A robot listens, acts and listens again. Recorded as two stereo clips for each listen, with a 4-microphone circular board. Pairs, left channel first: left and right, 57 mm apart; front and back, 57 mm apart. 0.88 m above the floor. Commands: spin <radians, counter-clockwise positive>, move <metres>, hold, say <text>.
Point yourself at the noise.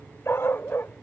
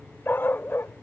spin 0.79
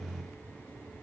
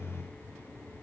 hold
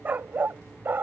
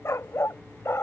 spin -0.70
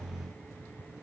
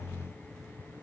hold
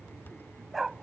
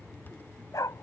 say Facing the dog barking.